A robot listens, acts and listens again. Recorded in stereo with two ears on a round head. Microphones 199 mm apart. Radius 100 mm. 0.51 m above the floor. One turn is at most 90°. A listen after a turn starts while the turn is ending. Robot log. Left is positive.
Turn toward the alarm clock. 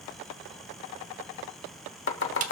cmd idle
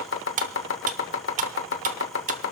cmd idle
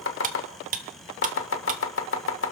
end: I can't make out an alarm clock, only cutlery clinking and chopping.